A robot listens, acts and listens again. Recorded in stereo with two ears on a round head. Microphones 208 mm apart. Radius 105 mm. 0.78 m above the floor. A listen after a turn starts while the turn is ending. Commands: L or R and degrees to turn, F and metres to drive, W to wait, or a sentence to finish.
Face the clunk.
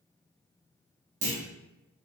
R35
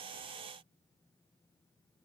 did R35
W
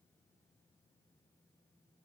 I heard a clunk, but can't make it out now. It was about straight ahead or 110° right.